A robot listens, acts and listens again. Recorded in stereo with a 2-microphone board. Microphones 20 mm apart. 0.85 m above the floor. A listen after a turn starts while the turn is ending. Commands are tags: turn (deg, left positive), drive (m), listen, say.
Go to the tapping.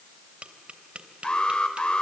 <turn deg="-90"/>
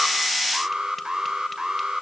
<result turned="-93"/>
<listen/>
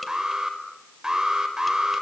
<listen/>
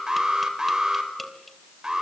<say>I heard tapping from this way, but can't make it out now. I did not reach it.</say>